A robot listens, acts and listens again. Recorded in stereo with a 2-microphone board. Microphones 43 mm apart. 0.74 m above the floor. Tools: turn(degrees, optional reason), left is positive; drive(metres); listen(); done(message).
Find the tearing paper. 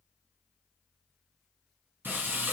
listen()
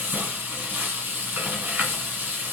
listen()
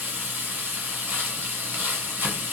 done("I can't make out tearing paper, only frying.")